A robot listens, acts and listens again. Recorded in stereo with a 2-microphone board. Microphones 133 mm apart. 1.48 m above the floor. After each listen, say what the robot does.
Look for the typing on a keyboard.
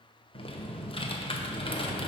Turn 40° left.
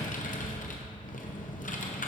Turn 95° left.
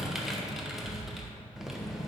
Facing the typing on a keyboard.